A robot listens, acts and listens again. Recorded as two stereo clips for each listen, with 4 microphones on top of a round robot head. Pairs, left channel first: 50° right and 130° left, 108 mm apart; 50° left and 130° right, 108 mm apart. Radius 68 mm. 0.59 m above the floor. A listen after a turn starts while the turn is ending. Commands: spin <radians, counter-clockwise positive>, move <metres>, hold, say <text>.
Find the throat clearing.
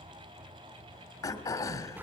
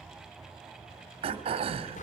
spin -1.92
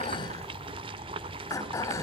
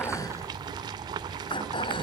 spin 0.17
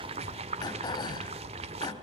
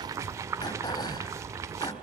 say Facing the throat clearing.